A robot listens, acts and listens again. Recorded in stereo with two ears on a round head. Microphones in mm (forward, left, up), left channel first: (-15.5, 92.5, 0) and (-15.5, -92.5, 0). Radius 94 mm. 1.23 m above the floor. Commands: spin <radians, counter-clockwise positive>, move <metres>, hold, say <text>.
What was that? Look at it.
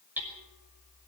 spin -0.52
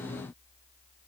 hold
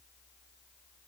hold
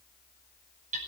spin -2.44
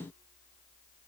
hold
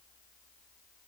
hold
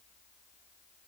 say Facing where the hammering came from. I can't hear it now.